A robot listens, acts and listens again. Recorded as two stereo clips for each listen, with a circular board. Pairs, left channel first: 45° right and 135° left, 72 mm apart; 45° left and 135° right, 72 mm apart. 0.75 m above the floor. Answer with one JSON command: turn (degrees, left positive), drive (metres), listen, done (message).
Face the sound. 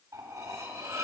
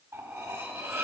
{"turn": 170}
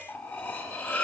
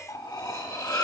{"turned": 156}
{"turn": 15}
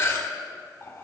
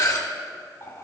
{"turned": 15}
{"done": "Facing the cutlery clinking."}